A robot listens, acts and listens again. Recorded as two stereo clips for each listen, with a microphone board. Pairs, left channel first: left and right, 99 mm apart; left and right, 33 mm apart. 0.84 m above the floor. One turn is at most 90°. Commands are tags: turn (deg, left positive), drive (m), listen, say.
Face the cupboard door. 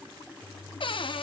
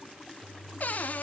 <turn deg="60"/>
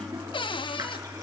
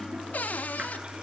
<turn deg="60"/>
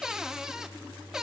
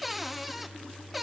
<say>Found it: a cupboard door, straight ahead, 1 to 2 m away.</say>